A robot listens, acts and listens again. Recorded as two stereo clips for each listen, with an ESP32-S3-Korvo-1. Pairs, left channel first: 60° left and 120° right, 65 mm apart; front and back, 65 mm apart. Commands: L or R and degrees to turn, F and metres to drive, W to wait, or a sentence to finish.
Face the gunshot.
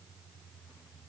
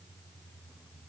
W
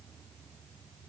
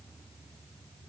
W
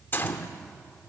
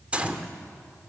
L115
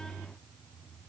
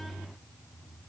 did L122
R10
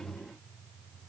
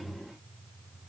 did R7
I heard a gunshot from this way, but can't make it out now.